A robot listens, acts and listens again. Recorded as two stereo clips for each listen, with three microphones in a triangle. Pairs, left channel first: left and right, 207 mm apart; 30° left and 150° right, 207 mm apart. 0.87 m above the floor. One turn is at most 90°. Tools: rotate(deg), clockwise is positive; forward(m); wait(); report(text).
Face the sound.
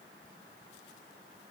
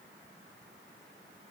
wait()
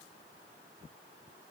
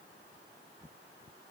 wait()
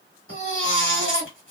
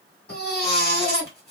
rotate(-70)
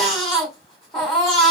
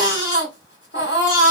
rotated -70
report("Found it: a baby crying, straight ahead, 1 to 2 m away.")